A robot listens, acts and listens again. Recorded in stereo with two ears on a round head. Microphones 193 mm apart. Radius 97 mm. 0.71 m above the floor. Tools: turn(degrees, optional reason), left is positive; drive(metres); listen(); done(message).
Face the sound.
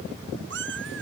turn(degrees=-60, reason="The cat meowing: about 60° right or 120° right.")
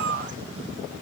turn(degrees=-60, reason="So it is at 60° right.")
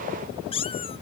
turn(degrees=25, reason="The cat meowing is now 25° left.")
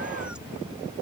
listen()
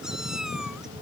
listen()
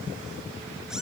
done("I heard a cat meowing from this way, but can't make it out now.")